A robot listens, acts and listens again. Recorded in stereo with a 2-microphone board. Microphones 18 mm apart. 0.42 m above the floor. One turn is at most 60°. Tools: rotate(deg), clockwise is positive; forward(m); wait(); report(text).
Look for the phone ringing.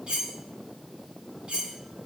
wait()
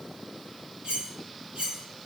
wait()
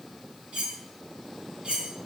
report("I can't make out a phone ringing, only cutlery clinking.")